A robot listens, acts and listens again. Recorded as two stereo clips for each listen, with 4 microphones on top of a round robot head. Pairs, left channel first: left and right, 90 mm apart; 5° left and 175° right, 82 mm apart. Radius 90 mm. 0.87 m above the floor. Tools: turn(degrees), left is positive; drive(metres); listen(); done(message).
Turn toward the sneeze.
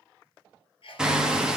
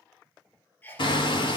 turn(degrees=70)
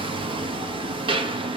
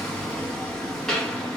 done("I heard a sneeze from this way, but can't make it out now.")